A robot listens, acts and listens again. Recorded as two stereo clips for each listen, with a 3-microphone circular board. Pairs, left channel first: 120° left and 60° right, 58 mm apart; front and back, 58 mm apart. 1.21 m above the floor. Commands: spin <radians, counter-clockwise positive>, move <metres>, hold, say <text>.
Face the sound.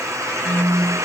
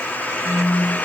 spin -1.05
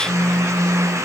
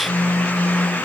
spin -0.44
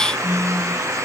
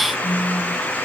spin 0.17
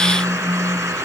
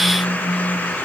say Found it: a phone buzzing, straight ahead.